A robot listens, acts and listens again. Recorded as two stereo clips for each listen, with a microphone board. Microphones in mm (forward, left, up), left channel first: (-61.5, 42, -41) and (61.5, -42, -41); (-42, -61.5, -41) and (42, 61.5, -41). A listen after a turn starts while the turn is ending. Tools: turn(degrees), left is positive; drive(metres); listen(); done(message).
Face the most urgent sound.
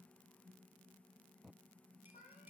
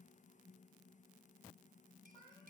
listen()
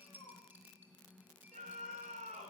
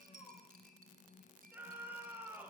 turn(degrees=-20)
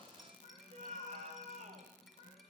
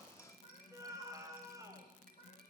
turn(degrees=-10)
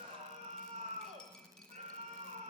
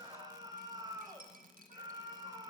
done("Facing the scream.")